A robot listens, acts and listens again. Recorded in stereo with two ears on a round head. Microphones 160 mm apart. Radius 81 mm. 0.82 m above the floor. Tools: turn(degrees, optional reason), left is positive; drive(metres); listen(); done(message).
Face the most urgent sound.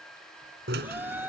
turn(degrees=-30)
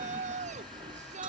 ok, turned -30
turn(degrees=-140, reason="So it is at 140° right.")
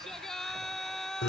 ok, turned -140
done("Found it: a shout, straight ahead.")